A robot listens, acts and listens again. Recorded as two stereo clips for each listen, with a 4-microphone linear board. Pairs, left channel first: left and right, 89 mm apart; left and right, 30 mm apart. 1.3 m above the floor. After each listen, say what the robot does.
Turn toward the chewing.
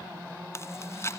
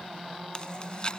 Turn 30° left.
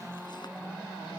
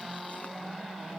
Keep listening.
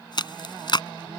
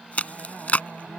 Turn 115° left.
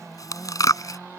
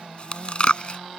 Turn 45° left.
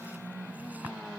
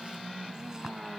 Keep listening.
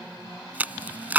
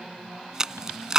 Turn 20° right.
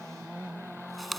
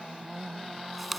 Facing the chewing.